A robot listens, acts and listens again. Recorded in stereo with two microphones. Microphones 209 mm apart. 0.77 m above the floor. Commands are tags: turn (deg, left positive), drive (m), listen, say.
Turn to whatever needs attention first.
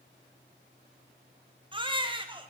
<turn deg="-25"/>
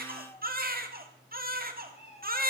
<turn deg="-130"/>
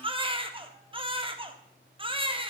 <turn deg="-25"/>
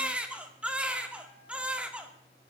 <say>Facing the baby crying, 1 to 2 m away.</say>